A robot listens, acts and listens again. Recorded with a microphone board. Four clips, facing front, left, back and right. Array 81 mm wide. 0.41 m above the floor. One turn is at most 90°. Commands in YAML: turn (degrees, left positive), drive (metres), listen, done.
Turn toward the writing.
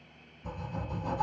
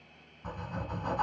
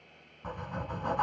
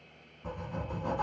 turn: 90
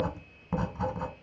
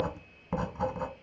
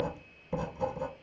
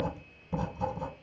turn: 45
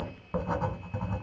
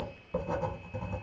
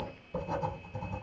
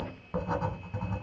turn: -30
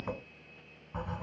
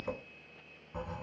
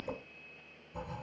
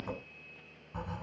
done: "Found it: writing, straight ahead."